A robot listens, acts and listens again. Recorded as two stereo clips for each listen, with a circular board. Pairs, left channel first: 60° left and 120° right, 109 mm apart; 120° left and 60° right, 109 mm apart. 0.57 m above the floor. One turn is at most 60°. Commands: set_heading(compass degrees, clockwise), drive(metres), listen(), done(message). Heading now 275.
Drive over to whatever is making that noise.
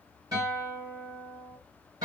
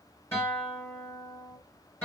set_heading(335)
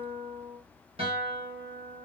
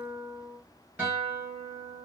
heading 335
set_heading(35)
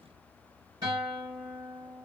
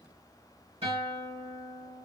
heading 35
set_heading(95)
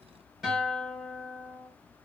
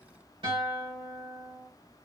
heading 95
set_heading(130)
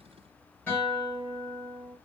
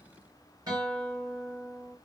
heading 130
set_heading(145)
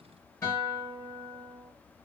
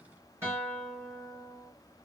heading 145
drive(1.0)
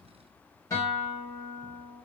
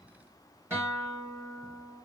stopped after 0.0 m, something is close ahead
done("Something is in my way. I am facing the guitar but have not reached it.")